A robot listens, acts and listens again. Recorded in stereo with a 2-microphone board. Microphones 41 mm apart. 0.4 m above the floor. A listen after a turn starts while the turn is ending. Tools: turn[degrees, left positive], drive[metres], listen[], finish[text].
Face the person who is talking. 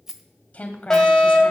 Thought: The woman speaking: about 35° left or 145° left.
Action: turn[35]
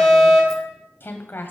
Thought: So it is at 100° left.
Action: turn[100]
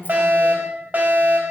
Action: listen[]
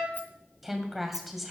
Action: finish[Found it: a woman speaking, straight ahead, 2 to 4 m away.]